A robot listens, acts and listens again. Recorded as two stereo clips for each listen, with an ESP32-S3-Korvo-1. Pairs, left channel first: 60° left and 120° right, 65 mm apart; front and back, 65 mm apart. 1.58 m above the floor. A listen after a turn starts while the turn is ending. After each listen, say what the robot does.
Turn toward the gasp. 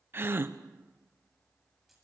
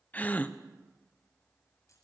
Turn 65° right.
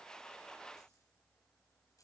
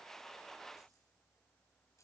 I heard a gasp from this way, but can't make it out now.